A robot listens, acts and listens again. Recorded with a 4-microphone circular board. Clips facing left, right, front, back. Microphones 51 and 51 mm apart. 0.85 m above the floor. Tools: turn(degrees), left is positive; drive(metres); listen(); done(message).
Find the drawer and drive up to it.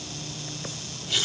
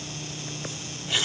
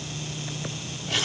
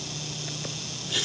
listen()
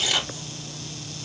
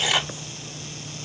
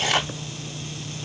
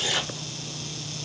listen()
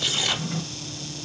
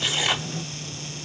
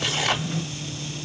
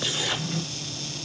turn(degrees=85)
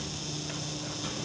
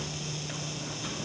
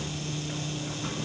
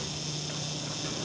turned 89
listen()
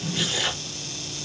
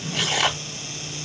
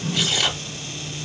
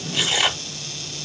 drive(metres=1.0)
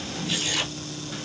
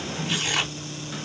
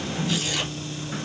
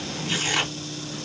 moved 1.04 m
listen()
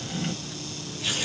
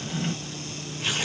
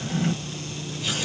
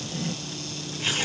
drive(metres=1.0)
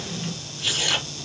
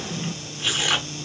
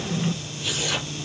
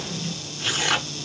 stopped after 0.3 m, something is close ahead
turn(degrees=-15)
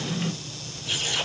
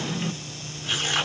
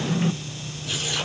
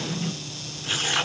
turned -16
done("Arrived at the drawer, straight ahead.")